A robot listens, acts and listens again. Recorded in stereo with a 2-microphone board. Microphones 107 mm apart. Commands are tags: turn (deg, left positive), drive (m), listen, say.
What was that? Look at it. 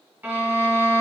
<turn deg="-20"/>
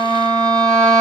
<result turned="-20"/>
<turn deg="-140"/>
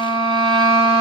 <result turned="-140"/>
<turn deg="-55"/>
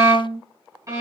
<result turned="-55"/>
<turn deg="-30"/>
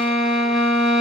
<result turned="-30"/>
<say>Facing the violin, 2 to 4 m away.</say>